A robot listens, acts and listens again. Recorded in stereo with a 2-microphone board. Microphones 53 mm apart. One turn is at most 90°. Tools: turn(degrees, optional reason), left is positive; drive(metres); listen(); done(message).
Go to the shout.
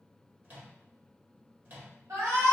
turn(degrees=-90)
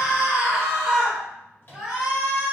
turn(degrees=-10, reason="So it is at 10° right.")
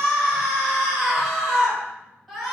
drive(metres=1.0)
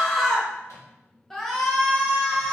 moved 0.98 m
drive(metres=1.0)
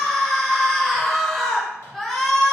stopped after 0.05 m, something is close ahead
done("Arrived at the shout, straight ahead.")